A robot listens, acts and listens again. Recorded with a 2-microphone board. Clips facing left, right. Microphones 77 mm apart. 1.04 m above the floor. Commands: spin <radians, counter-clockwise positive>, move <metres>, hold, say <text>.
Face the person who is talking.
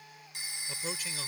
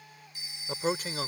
spin -0.79
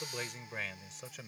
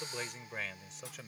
say Found it: a man speaking, straight ahead.